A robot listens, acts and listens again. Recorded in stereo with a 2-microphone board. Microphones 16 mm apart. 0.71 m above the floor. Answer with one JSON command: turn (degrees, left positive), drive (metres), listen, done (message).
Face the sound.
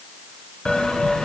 {"turn": 90}
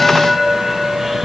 {"turn": -15}
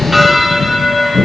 {"done": "Found it: a bell, straight ahead, 1 to 2 m away."}